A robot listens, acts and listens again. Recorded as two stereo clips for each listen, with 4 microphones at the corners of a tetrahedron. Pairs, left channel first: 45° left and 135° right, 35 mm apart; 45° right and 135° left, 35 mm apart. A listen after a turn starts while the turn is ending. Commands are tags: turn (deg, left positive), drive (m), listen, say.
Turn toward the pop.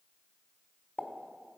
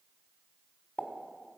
<say>Found it: a pop, straight ahead, 1 to 2 m away.</say>